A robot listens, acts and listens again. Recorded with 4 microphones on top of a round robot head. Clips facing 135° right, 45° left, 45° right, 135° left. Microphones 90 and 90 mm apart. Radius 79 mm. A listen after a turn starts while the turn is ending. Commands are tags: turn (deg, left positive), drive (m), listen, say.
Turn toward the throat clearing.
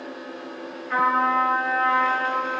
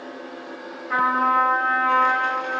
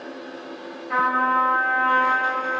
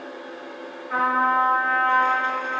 <listen/>
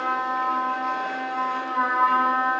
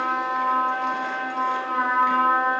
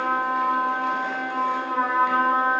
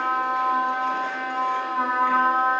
<listen/>
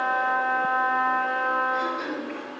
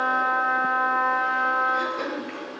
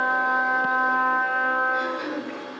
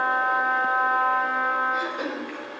<turn deg="85"/>
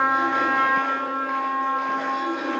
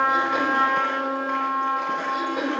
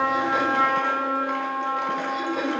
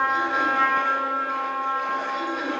<say>Found it: throat clearing, straight ahead.</say>